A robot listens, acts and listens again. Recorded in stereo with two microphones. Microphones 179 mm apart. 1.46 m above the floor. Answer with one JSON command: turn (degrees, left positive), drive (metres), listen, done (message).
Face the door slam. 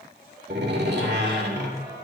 {"turn": -75}
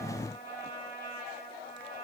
{"listen": true}
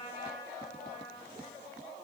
{"done": "I heard a door slam, but can't make it out now. It was about straight ahead or 30° right."}